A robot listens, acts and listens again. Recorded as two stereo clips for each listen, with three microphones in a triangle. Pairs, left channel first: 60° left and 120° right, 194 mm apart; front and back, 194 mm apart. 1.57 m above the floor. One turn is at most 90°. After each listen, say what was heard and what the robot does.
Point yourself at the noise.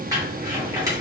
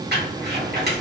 The crumpling: 175° left. Turn 90° left.
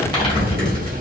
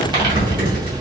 The crumpling is now 120° left. Turn 90° left.
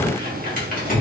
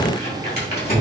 The crumpling is now 25° left. Turn 25° left.
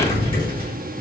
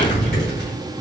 Facing the crumpling.